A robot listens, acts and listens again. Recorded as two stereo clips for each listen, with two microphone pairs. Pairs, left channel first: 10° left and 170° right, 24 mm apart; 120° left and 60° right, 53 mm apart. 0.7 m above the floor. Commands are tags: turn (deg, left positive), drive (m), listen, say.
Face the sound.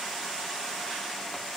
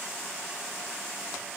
<listen/>
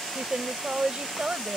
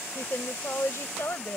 <turn deg="150"/>
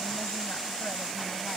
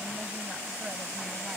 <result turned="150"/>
<listen/>
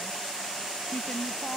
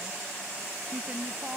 <say>Facing the woman speaking.</say>